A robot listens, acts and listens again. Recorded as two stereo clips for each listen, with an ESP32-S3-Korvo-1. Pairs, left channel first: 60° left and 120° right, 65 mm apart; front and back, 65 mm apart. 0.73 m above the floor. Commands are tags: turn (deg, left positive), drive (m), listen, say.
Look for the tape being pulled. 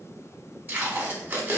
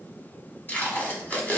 <turn deg="-65"/>
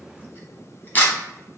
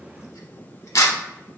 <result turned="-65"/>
<say>Found it: tape being pulled, straight ahead, under 1 m away.</say>